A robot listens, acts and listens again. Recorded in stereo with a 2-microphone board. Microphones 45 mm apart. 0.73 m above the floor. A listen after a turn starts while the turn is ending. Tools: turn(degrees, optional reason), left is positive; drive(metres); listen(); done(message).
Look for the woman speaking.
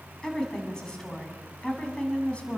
turn(degrees=25, reason="The woman speaking: about 25° left or 155° left.")
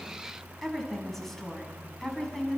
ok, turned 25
turn(degrees=30)
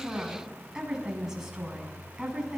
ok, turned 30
turn(degrees=-10, reason="So it is at 10° right.")
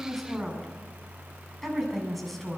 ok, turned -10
done("Found it: a woman speaking, straight ahead.")